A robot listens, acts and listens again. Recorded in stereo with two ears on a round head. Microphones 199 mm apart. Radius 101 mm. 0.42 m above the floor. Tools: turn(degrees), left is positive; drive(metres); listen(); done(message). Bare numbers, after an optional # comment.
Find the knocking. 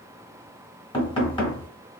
# The knocking: about 25° left or 155° left.
turn(25)
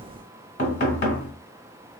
# So it is at 125° left.
turn(125)
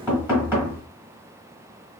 # The knocking is now 10° right.
turn(-10)
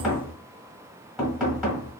done("Found it: knocking, straight ahead, 1 to 2 m away.")